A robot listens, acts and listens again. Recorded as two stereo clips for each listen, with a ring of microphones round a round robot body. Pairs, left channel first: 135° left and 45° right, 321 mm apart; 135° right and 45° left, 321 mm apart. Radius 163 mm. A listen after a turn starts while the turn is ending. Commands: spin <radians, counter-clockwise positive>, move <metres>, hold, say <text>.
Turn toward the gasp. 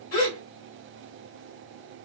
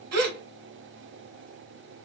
spin 1.48
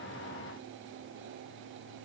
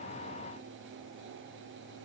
say Facing where the gasp came from. I can't hear it now.